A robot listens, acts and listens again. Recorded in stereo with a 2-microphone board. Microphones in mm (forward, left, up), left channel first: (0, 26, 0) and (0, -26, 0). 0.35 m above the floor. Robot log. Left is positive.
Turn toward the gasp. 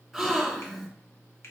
cmd yaw -30
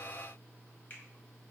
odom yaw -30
cmd idle
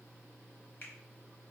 end: I heard a gasp, but can't make it out now. It was about 25° left or 145° right.